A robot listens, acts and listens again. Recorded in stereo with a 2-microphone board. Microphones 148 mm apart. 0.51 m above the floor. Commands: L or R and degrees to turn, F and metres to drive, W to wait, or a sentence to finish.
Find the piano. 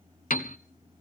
L70
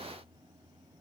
W
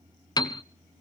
L30
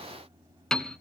Facing the piano, under 1 m away.